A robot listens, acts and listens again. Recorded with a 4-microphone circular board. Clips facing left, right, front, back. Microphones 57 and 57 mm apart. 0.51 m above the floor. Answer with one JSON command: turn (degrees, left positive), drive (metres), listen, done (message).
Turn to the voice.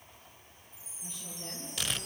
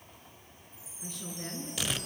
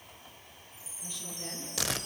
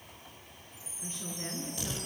{"turn": -120}
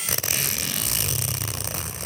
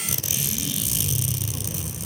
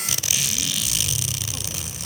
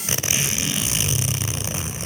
{"listen": true}
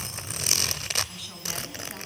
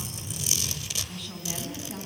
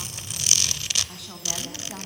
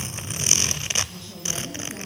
{"done": "Found it: a woman speaking, straight ahead, over 4 m away."}